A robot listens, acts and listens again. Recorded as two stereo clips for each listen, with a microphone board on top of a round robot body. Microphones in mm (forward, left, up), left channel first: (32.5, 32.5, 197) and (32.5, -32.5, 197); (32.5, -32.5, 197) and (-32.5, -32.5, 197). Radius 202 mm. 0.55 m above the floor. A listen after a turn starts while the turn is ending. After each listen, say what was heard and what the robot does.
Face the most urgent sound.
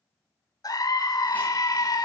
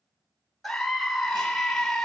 The scream: 85° left. Turn 85° left.
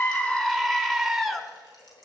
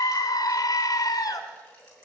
Facing the scream, 1 to 2 m away.